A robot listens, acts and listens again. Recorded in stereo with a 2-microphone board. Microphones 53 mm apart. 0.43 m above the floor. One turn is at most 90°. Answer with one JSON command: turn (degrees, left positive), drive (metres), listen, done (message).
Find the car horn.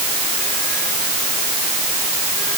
{"listen": true}
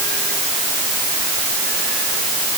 {"listen": true}
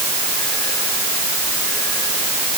{"done": "I can't make out a car horn."}